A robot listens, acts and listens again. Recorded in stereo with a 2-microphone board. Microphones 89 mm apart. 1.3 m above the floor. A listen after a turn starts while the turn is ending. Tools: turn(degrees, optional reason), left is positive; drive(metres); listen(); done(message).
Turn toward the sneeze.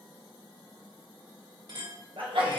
turn(degrees=-70, reason="The sneeze: about 70° right or 110° right.")
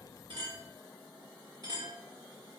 listen()
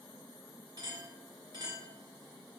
done("I heard a sneeze, but can't make it out now. It was about straight ahead or 40° right.")